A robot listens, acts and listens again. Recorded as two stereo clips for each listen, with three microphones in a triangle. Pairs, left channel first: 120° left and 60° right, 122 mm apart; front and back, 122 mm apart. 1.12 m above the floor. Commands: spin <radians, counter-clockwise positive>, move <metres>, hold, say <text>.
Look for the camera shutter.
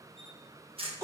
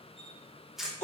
spin -1.66
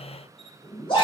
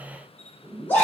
hold
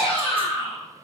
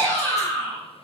hold
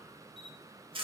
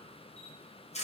spin -0.35
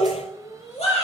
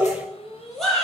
hold
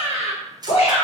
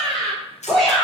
say Facing the camera shutter, under 1 m away.